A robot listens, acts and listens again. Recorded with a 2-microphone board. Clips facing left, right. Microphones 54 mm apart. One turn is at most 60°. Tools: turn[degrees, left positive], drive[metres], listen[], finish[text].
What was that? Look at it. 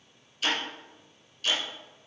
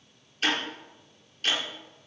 Thought: The ticking: about 45° right or 135° right.
Action: turn[-45]
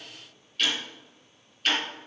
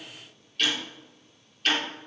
Action: finish[Facing the ticking, over 4 m away.]